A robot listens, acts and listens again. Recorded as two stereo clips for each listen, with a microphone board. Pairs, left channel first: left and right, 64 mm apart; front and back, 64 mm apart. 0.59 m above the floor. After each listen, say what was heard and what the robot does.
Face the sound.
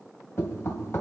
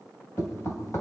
The knocking: 40° left. Turn 40° left.
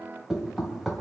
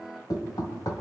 Facing the knocking.